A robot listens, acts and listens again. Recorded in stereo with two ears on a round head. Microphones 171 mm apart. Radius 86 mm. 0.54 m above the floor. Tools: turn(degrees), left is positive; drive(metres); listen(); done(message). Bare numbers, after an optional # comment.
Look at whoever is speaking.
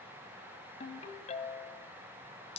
listen()
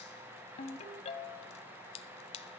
listen()
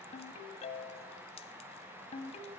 done("I can't make out anyone speaking to turn to.")